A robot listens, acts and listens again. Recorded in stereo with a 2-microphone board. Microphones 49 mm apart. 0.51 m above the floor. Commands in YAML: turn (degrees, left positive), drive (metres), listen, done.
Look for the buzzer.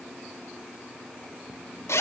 listen: true
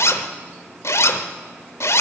listen: true
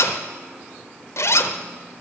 done: "I can't make out a buzzer to turn to."